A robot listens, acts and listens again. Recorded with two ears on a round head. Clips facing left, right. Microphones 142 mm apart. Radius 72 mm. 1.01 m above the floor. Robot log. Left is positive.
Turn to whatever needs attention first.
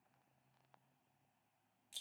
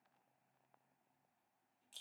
cmd idle
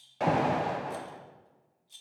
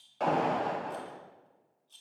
cmd yaw +30
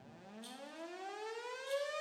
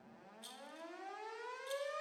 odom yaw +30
note: So it is at 145° left.
cmd yaw +145
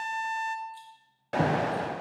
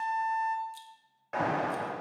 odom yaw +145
note: The alarm is now 40° left.
cmd yaw +40
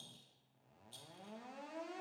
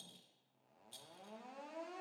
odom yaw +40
cmd idle
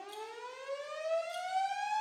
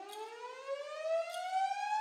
end: Found it: an alarm, straight ahead, under 1 m away.